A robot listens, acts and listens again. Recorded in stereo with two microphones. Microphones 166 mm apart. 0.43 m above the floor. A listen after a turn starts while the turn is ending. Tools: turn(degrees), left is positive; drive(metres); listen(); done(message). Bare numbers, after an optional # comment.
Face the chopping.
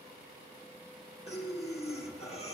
listen()
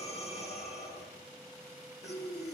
listen()
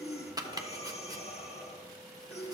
# The chopping: about 25° right or 155° right.
turn(-25)
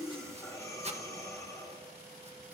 # So it is at 125° right.
turn(-125)
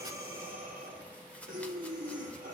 listen()
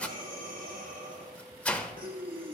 # The chopping is now 10° left.
turn(10)
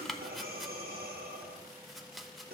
done("Found it: chopping, straight ahead.")